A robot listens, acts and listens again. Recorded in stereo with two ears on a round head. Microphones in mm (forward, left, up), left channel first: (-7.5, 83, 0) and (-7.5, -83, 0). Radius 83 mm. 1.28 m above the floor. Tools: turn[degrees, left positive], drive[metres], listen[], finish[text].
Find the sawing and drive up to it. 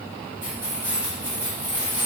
Action: listen[]
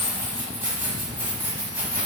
Action: listen[]
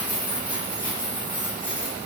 Action: finish[I can't make out sawing to turn to.]